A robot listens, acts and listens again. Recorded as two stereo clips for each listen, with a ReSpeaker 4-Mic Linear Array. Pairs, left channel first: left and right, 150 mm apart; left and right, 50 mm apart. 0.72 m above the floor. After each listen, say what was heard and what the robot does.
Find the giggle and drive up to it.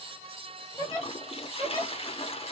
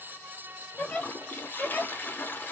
The giggle: about 30° left or 150° left. Turn 30° left.
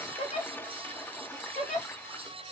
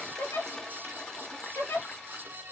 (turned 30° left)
So it is at 120° left. Turn 120° left.
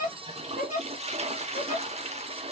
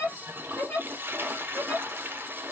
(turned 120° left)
The giggle is now 55° left. Turn 55° left.
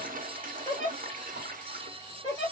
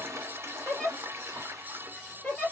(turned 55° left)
The giggle is now 20° left. Turn 20° left.
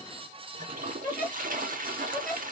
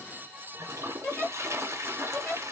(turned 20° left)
Drive 1.0 m forward.
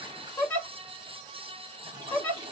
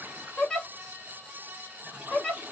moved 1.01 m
The giggle is now 15° left. Turn 15° left.
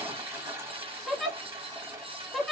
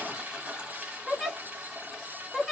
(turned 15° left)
Drive 1.0 m forward.
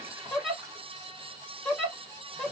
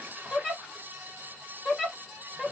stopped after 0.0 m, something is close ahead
Arrived at the giggle, straight ahead.